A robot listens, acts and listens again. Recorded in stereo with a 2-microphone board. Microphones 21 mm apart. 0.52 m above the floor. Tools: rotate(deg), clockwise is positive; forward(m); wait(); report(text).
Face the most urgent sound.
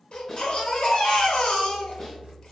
rotate(-60)
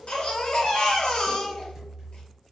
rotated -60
rotate(-50)
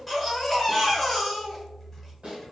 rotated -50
report("Facing the baby crying.")